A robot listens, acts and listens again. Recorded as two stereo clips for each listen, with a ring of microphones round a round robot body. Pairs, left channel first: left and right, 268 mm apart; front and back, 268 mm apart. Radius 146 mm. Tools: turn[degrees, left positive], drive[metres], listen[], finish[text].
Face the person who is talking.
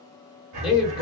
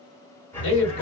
Action: finish[Facing the man speaking.]